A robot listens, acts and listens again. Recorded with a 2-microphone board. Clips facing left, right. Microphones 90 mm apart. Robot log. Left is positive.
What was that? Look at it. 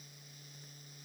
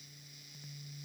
cmd idle
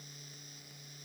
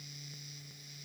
cmd idle
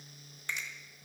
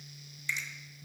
note: The finger snap: about 50° left or 130° left.
cmd yaw +50
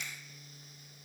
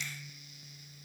cmd idle
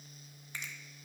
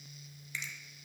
note: So it is at 60° left.
cmd yaw +60
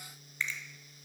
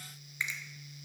note: The finger snap is now 15° right.
cmd yaw -15
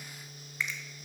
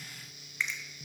end: Facing the finger snap, 1 to 2 m away.